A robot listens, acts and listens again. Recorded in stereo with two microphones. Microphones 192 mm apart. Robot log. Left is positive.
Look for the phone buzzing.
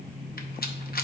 cmd idle
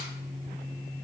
cmd idle
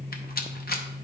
end: I can't make out a phone buzzing, only a rattle.